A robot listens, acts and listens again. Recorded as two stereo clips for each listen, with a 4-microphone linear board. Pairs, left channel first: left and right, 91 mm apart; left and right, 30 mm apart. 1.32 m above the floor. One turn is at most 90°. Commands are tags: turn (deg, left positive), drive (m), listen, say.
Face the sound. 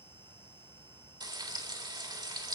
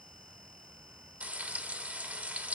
<turn deg="-50"/>
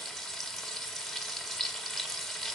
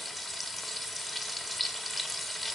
<say>Facing the frying, 2 to 4 m away.</say>